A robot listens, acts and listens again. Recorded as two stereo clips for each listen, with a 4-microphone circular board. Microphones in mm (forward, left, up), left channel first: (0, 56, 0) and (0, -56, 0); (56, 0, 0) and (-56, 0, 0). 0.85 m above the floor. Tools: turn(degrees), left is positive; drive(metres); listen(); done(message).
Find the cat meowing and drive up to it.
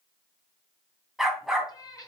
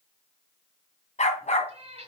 turn(degrees=145)
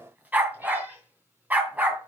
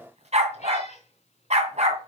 turn(degrees=-15)
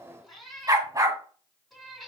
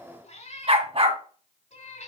drive(metres=1.0)
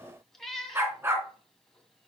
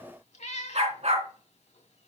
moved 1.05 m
drive(metres=1.0)
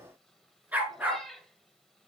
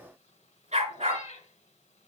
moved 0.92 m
drive(metres=1.0)
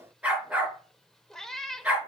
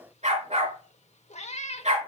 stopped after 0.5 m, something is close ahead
done("Arrived at the cat meowing, straight ahead.")